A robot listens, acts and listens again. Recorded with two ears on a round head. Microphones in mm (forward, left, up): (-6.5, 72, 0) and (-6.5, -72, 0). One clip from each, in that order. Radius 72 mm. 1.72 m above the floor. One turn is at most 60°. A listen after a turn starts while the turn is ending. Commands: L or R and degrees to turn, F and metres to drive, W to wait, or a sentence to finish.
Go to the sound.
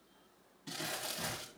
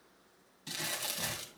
R60
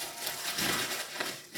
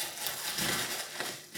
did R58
R10
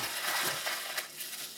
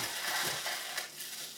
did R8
F1.0
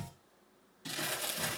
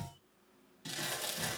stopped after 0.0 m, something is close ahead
Something is in my way. I am facing the crumpling but have not reached it.